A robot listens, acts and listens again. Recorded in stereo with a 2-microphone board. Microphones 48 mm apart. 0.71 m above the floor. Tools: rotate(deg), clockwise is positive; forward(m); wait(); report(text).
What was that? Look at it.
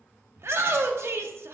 rotate(60)
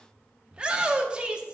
rotate(25)
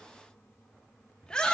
rotate(-20)
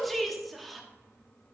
report("Facing the shout.")